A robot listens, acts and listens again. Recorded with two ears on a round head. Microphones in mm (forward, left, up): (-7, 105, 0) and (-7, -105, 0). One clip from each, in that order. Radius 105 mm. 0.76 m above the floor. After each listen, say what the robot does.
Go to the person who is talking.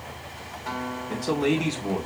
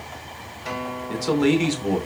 Turn 65° right.
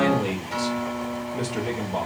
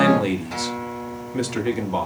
Turn 50° right.
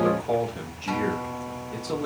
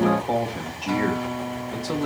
Turn 10° right.
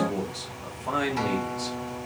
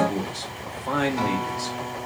Drive 1.0 m forward.
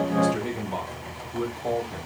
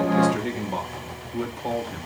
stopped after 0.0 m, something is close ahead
Blocked. The man speaking is further on, straight ahead.